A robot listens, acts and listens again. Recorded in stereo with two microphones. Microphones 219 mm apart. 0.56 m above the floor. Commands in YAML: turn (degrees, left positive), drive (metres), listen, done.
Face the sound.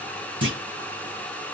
turn: -65
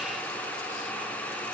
listen: true
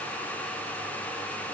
done: "I heard a clunk, but can't make it out now. It was about straight ahead or 50° right."